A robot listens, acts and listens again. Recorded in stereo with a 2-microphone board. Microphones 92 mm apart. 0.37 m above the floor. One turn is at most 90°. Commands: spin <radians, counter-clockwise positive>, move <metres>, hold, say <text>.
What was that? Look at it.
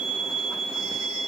hold
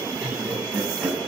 spin -0.35
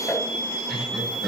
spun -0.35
spin 0.52
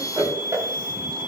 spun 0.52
spin -0.52
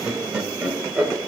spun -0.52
spin -0.26
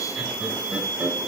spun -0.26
hold
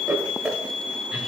spin -0.17
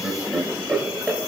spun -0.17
say Facing the laughter, 2 to 4 m away.